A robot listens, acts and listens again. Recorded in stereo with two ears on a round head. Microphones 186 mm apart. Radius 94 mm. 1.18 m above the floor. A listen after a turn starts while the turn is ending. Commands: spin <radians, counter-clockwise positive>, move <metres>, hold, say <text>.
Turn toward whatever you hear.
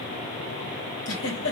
spin 0.96
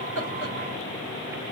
hold
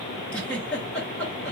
say Found it: a giggle, straight ahead, 2 to 4 m away.